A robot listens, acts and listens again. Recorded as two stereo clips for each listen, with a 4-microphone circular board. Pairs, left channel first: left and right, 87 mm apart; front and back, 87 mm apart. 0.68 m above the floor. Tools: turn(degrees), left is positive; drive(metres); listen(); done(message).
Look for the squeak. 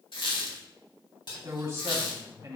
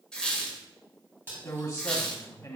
turn(degrees=80)
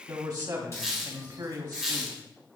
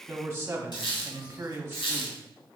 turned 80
done("Found it: a squeak, straight ahead, 1 to 2 m away.")